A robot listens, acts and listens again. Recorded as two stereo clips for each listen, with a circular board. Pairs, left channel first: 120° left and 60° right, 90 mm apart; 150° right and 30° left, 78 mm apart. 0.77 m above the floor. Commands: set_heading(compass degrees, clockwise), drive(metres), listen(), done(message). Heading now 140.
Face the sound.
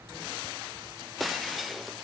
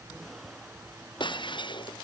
set_heading(290)
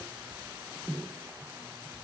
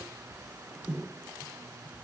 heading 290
done("Facing where the breaking glass came from. I can't hear it now.")